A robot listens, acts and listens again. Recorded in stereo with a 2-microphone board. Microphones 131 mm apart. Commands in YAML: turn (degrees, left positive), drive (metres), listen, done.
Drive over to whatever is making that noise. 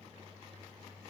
listen: true
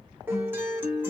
turn: -15
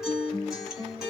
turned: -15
drive: 1.0
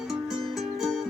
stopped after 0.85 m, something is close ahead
done: "Arrived at the guitar, straight ahead."